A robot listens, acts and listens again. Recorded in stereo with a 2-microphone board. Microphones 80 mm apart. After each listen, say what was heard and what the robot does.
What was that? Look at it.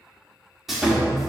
Turn 30° left.
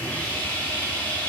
So it is at 150° left. Turn 150° left.
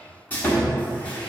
The sawing is now 25° left. Turn 25° left.
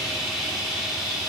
The sawing is now 10° right. Turn 10° right.
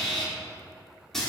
Facing the sawing, 1 to 2 m away.